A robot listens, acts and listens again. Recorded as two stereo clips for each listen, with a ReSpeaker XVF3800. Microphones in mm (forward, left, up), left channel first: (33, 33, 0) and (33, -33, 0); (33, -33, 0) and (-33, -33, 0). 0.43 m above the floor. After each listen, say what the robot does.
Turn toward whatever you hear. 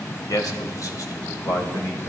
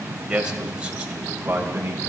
Turn 115° left.
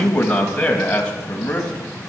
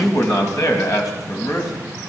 Turn 20° left.
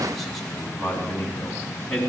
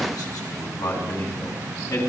Turn 10° left.
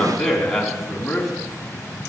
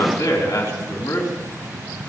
Facing the man speaking, 2 to 4 m away.